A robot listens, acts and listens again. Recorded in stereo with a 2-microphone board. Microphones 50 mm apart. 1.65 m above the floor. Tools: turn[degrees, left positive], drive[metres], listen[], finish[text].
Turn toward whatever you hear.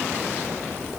Action: listen[]
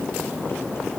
Action: listen[]
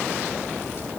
Action: finish[I can't make out anything.]